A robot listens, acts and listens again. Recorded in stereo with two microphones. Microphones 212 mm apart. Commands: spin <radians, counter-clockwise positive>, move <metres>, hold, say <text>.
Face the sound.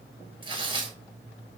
spin -0.44
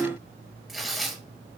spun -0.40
say Facing the tearing paper.